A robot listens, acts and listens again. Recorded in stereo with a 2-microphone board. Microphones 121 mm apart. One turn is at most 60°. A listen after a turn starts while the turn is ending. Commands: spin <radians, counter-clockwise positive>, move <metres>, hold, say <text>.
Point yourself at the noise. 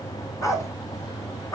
spin 0.44
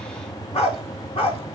spin 1.05
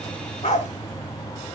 spin 1.05
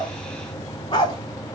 spin 0.61
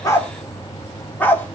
spin 0.26
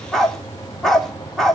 say Found it: a dog barking, straight ahead, 1 to 2 m away.